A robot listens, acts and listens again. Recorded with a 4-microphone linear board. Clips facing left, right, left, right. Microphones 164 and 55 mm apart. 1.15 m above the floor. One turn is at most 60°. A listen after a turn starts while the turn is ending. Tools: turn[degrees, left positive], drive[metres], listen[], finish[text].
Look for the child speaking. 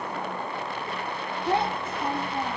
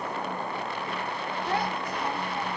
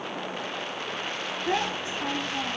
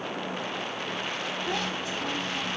Thought: The child speaking: about 30° left or 150° left.
Action: turn[30]
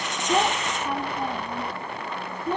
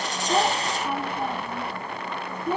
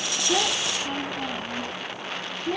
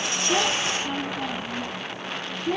Thought: So it is at 10° right.
Action: turn[-10]
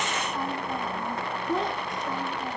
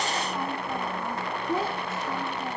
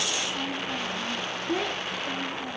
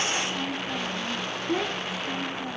Action: finish[Facing the child speaking.]